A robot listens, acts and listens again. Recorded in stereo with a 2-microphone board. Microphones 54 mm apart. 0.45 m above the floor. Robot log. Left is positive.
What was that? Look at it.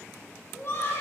note: The laughter: about 50° left or 130° left.
cmd yaw +50
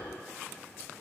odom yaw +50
cmd idle
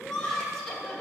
note: So it is at 10° left.
cmd yaw +10
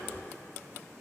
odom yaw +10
cmd idle
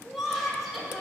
end: Facing the laughter, 2 to 4 m away.